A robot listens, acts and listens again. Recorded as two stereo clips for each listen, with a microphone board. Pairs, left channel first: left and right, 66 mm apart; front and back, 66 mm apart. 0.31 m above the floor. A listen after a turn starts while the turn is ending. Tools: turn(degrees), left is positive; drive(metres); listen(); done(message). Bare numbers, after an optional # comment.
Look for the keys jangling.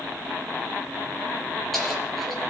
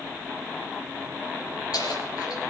done("Found it: keys jangling, straight ahead.")